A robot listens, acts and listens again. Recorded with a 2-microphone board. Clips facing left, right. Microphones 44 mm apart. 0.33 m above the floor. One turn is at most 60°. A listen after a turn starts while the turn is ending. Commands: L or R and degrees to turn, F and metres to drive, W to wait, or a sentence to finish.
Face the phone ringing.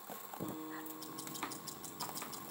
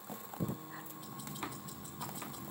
W
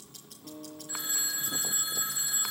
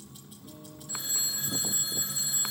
L25
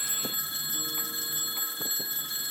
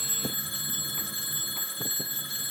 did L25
Facing the phone ringing.